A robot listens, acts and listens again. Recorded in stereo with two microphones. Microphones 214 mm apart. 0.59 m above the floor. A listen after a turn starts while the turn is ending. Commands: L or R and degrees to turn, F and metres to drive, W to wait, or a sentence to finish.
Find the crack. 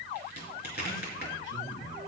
L50
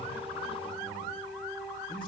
W
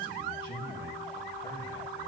I heard a crack, but can't make it out now. It was about straight ahead or 80° left.